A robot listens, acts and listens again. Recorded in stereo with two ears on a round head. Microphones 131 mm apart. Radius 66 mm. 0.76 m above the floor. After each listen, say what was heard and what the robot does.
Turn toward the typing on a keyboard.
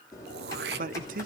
The typing on a keyboard: about 20° left or 160° left. Turn 20° left.
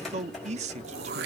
Facing the typing on a keyboard, over 4 m away.